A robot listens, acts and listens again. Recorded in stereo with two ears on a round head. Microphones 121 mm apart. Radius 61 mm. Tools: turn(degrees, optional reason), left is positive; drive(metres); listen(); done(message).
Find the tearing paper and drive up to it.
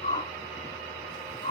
listen()
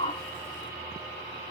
listen()
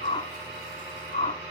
done("I can't make out tearing paper to turn to.")